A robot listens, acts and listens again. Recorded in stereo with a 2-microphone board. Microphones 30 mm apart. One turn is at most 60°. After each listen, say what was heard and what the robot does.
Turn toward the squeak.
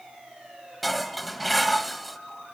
Keep listening.
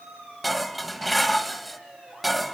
Keep listening.
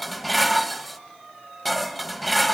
I can't make out a squeak to turn to.